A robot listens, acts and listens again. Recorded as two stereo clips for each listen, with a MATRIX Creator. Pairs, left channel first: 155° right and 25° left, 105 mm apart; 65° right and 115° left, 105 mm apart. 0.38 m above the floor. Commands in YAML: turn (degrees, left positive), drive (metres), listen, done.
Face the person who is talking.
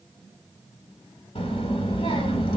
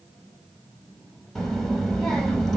turn: -155
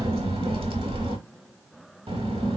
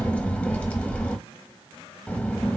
turn: 10
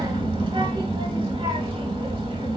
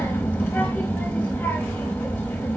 done: "Found it: a child speaking, straight ahead."